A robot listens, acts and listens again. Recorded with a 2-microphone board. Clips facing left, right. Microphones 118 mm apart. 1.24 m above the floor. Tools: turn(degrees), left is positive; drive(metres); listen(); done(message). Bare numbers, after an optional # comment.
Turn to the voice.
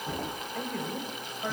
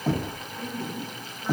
turn(90)
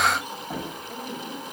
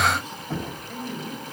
# So it is at 10° left.
turn(10)
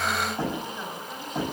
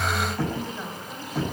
listen()
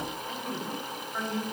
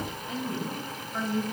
# The woman speaking is now 10° right.
turn(-10)
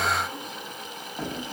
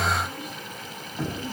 listen()
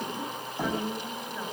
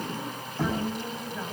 done("Found it: a woman speaking, straight ahead.")